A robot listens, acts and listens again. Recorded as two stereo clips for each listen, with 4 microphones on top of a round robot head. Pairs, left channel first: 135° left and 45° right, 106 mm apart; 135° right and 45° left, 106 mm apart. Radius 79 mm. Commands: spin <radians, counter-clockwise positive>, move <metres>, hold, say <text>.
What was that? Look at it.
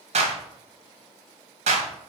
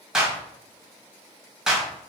spin -0.70
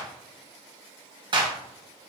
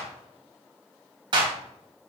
say Facing the clap.